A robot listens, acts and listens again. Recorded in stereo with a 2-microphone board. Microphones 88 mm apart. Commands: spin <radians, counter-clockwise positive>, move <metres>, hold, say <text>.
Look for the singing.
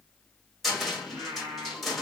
spin -1.57
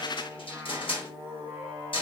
spin -0.44
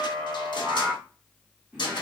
say Facing the singing.